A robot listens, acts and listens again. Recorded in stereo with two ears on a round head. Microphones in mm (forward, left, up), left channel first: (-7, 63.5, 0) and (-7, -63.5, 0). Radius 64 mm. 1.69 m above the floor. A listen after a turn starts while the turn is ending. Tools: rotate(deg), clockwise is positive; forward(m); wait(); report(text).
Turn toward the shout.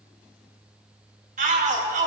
rotate(60)
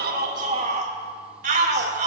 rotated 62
rotate(55)
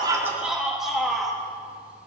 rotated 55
report("Facing the shout.")